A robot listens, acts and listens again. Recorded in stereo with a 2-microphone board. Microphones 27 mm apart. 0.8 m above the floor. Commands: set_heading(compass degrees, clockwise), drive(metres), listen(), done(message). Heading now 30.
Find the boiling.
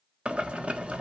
set_heading(85)
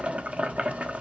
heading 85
set_heading(155)
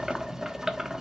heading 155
set_heading(175)
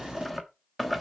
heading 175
done("Facing the boiling, 1 to 2 m away.")